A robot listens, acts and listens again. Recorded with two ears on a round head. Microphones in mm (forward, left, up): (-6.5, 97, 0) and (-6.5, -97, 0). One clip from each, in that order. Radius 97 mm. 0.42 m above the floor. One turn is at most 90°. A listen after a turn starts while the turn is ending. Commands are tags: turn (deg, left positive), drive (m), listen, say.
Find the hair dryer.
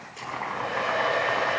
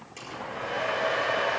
<turn deg="-20"/>
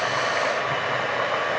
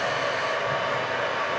<say>Found it: a hair dryer, straight ahead.</say>